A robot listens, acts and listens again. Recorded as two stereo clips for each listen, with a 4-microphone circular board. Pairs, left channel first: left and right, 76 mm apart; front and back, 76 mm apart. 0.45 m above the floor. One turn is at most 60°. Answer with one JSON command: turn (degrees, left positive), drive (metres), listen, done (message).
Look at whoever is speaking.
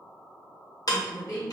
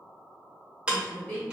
{"turn": 60}
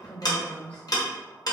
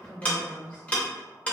{"turn": 25}
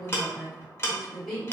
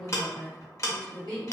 {"done": "Facing the woman speaking, 1 to 2 m away."}